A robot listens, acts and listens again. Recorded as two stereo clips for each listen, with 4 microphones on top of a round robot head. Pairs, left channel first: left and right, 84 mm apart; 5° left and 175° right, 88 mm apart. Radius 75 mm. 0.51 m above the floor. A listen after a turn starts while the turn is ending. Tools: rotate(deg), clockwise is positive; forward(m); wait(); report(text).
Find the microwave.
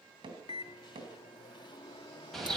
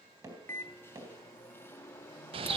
rotate(-70)
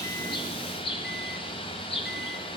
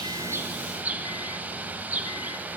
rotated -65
wait()
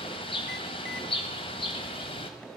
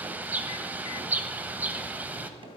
wait()
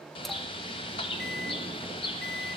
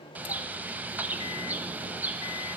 report("Found it: a microwave, straight ahead.")